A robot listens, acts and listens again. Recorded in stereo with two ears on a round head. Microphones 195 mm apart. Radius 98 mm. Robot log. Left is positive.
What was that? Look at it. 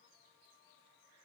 cmd idle
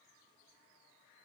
cmd idle
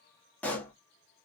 cmd yaw +30
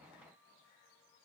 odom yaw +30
cmd idle
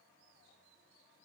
end: I heard a pop, but can't make it out now. It was about 25° right or 145° left.